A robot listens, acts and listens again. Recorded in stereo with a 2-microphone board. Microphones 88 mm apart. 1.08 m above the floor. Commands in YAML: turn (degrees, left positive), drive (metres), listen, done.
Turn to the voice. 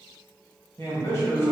turn: 30
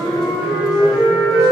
listen: true
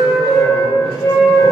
listen: true
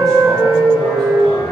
done: "I heard a man speaking, but can't make it out now. It was about straight ahead or 120° left."